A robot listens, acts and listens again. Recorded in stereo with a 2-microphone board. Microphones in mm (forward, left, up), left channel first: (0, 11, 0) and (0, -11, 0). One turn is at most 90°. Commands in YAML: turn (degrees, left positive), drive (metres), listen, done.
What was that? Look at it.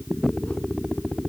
listen: true
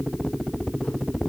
listen: true
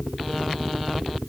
done: "I can't make out anything."